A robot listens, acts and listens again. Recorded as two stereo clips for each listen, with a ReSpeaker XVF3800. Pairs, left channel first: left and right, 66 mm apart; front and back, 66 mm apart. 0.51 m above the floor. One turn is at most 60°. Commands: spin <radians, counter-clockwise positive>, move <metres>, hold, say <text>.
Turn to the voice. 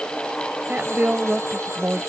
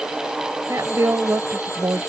spin -1.05
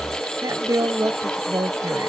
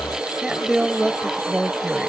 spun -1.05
spin -1.05
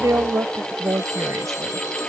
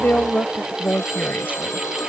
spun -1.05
spin -1.05
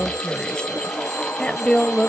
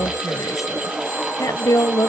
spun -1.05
spin 0.26
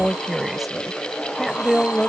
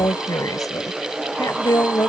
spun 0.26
say Facing the woman speaking.